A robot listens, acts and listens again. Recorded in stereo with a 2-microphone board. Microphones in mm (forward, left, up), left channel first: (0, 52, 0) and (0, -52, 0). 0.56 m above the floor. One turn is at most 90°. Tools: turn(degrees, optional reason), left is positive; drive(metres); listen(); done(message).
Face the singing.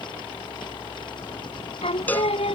turn(degrees=90)
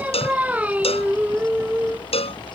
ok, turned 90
turn(degrees=-15, reason="So it is at 15° right.")
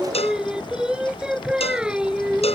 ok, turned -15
turn(degrees=-10, reason="The singing is now 10° right.")
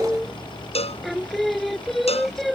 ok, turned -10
done("Found it: singing, straight ahead.")